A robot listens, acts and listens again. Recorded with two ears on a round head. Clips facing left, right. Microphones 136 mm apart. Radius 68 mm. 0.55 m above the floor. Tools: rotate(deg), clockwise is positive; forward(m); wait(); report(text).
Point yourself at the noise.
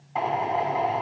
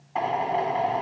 rotate(-30)
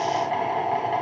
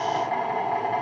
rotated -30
rotate(-150)
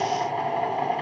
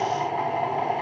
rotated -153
report("Facing the drill.")